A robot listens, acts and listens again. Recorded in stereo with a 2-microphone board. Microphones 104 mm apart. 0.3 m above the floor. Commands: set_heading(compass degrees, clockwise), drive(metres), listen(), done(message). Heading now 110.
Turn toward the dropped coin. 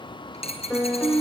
set_heading(20)
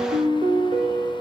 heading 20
done("Facing where the dropped coin came from. I can't hear it now.")